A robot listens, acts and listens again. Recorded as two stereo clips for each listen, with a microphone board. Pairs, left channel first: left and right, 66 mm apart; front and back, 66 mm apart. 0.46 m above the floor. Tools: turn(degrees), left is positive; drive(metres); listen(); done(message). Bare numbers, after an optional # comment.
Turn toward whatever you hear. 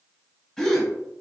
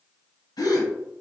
# The gasp: 10° left.
turn(10)
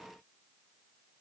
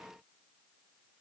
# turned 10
done("Facing where the gasp came from. I can't hear it now.")